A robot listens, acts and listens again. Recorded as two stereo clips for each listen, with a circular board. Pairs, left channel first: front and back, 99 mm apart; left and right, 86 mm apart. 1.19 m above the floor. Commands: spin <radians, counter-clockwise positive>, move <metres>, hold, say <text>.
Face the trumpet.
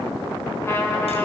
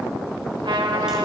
spin -1.13
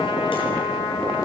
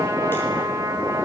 spin -0.52
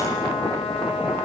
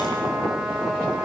hold
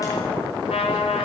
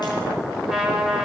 say Facing the trumpet, over 4 m away.